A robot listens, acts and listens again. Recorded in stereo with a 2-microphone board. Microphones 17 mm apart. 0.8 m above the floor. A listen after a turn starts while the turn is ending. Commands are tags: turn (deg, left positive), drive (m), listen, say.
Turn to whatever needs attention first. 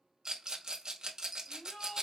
<turn deg="90"/>
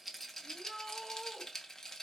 <say>Found it: a shout, straight ahead.</say>